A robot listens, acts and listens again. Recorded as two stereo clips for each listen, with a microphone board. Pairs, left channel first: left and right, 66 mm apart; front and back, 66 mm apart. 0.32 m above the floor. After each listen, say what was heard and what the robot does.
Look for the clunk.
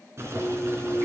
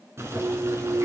The clunk: 170° left. Turn 170° left.
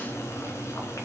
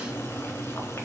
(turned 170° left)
Facing where the clunk came from. I can't hear it now.